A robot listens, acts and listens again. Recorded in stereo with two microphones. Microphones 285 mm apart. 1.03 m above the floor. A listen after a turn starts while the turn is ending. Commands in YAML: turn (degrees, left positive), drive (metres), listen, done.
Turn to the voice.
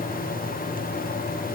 listen: true
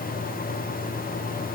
listen: true
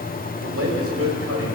turn: -55
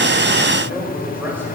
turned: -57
done: "Facing the man speaking."